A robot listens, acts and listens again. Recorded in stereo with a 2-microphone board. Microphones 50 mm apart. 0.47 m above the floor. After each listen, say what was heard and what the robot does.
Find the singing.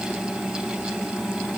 Keep listening.
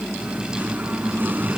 The singing: about 45° right or 135° right. Turn 45° right.
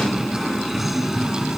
So it is at 10° right. Turn 10° right.
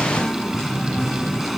Facing the singing.